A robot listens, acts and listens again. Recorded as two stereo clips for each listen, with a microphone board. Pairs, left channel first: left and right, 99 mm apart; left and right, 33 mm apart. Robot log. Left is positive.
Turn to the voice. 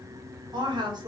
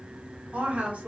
note: The woman speaking: about 50° right or 130° right.
cmd yaw -50
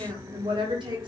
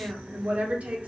note: So it is at 70° right.
cmd yaw -70
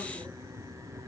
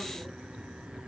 cmd idle
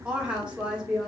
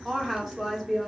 note: The woman speaking is now 10° right.
cmd yaw -10
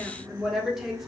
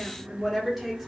end: Found it: a woman speaking, straight ahead.